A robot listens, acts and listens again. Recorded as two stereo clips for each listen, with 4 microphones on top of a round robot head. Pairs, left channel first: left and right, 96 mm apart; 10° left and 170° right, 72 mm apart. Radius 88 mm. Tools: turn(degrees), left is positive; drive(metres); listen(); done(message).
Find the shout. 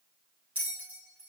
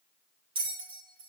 listen()
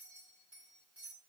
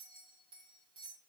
listen()
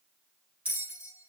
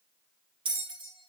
done("I can't make out a shout to turn to.")